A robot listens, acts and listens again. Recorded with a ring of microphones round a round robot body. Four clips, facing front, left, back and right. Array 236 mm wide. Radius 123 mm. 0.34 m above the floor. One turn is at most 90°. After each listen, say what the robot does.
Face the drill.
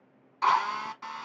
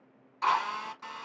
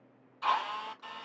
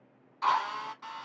Found it: a drill, straight ahead.